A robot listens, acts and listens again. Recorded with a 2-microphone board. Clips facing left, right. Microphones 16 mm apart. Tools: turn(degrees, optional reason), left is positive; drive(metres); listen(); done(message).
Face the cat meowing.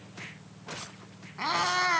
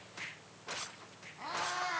turn(degrees=65, reason="The cat meowing: about 65° left or 115° left.")
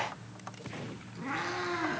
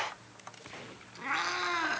turn(degrees=-45, reason="So it is at 45° right.")
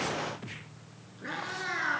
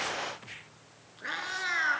turn(degrees=-35, reason="The cat meowing is now 35° right.")
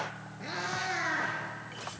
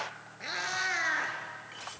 turn(degrees=-30, reason="The cat meowing is now 30° right.")
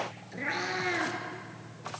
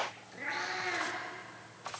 turn(degrees=10, reason="The cat meowing is now 10° left.")
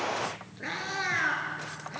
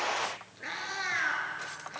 done("Found it: a cat meowing, straight ahead, 2 to 4 m away.")